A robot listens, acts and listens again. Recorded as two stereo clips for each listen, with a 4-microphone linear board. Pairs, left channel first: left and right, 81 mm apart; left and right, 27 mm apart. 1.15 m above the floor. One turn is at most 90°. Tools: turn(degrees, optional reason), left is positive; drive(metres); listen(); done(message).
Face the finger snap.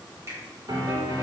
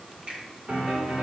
turn(degrees=-40, reason="The finger snap: about 40° right or 140° right.")
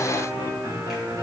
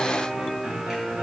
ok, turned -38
listen()
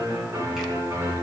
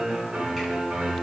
listen()
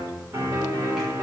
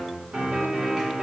done("I heard a finger snap, but can't make it out now. It was about 5° right or 100° right.")